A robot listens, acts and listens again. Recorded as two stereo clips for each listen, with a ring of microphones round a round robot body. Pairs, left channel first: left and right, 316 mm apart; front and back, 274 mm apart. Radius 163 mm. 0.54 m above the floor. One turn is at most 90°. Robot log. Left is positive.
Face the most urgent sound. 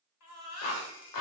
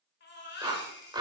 note: The baby crying: 50° left.
cmd yaw +50
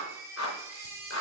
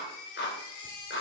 note: The baby crying is now 10° right.
cmd yaw -10
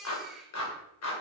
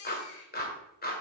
end: Facing the baby crying.